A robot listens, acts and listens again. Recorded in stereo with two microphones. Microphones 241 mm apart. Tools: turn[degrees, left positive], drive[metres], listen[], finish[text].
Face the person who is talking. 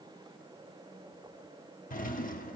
Action: listen[]
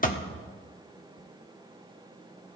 Action: listen[]
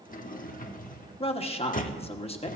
Thought: The man speaking: about 25° left or 155° left.
Action: turn[25]
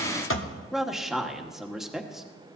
Action: finish[Found it: a man speaking, straight ahead.]